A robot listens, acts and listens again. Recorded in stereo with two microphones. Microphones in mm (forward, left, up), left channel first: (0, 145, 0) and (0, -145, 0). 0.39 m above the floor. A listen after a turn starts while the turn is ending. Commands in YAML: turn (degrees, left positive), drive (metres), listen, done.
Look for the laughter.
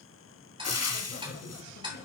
turn: 65
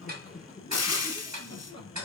turn: 20
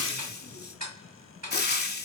listen: true
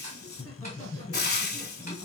turn: 15
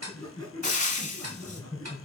done: "Facing the laughter."